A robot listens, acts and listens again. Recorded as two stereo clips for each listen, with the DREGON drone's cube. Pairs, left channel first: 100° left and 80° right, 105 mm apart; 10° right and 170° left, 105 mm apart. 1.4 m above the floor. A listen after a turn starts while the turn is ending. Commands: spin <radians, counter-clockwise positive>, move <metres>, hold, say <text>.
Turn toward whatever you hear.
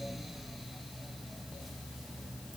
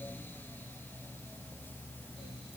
hold
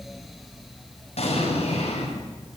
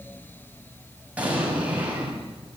spin 1.66
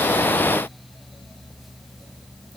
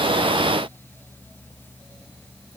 say I heard an explosion from this way, but can't make it out now.